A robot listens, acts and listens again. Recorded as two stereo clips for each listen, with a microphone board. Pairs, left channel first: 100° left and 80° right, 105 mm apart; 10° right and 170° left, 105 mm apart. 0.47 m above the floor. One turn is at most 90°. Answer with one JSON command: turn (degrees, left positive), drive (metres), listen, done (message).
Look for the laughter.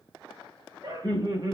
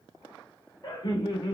{"turn": -45}
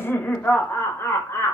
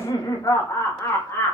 {"turn": 50}
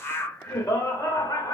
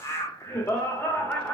{"turn": 60}
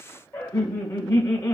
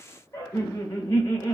{"turn": 45}
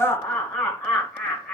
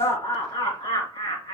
{"turn": 10}
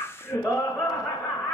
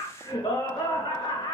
{"done": "Facing the laughter, 1 to 2 m away."}